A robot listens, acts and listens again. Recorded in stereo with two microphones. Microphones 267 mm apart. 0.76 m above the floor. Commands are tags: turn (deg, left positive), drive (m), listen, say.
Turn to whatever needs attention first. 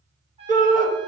<turn deg="-30"/>
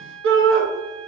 <turn deg="-115"/>
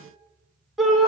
<say>Facing the shout.</say>